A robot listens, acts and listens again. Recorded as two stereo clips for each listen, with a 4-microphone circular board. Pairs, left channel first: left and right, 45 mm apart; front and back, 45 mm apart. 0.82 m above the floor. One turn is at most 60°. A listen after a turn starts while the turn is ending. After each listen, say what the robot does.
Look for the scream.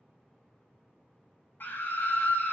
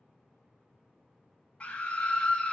Turn 60° left.
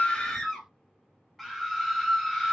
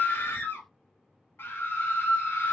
Found it: a scream, straight ahead, 1 to 2 m away.